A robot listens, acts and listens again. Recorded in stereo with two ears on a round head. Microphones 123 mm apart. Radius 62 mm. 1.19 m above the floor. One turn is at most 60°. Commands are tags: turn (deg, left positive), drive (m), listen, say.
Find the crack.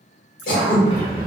<turn deg="35"/>
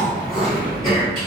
<listen/>
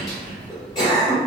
<say>I heard a crack, but can't make it out now. It was about straight ahead or 110° left.</say>